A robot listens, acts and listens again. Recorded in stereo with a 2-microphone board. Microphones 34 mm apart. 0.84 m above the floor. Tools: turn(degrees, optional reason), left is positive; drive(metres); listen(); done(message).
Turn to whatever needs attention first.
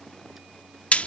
listen()
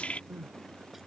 turn(degrees=-90)
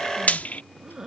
turn(degrees=-10, reason="So it is at 10° right.")
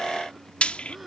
listen()
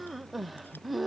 done("Found it: crying, straight ahead.")